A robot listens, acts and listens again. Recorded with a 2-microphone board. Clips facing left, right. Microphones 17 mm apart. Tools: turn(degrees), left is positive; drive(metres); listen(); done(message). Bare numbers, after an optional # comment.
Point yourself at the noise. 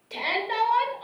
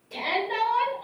# The shout: about 50° left or 130° left.
turn(50)
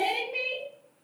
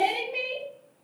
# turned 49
# So it is at 10° left.
turn(10)
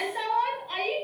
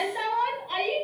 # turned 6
done("Found it: a shout, straight ahead, 1 to 2 m away.")